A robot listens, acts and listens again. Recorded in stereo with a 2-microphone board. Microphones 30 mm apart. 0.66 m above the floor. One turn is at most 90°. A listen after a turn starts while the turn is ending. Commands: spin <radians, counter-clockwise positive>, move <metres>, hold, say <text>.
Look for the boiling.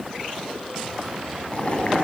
spin 0.79
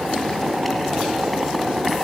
say Facing the boiling.